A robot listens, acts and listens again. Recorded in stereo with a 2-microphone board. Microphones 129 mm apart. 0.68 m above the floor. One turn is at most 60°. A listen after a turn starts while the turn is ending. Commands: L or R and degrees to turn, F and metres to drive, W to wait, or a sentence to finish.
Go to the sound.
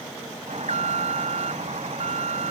R60
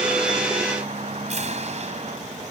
R60
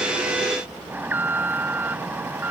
R15
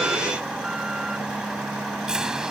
F1.0
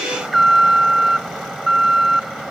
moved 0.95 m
F1.0
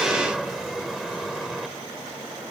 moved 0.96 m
F1.0
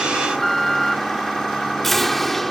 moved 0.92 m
F1.0
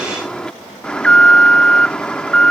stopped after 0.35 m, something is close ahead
L10
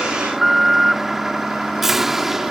I am next to the alarm.